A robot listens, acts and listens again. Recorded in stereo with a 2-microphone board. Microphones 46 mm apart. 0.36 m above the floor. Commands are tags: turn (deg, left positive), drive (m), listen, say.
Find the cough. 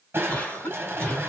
<turn deg="30"/>
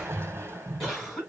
<say>Found it: a cough, straight ahead.</say>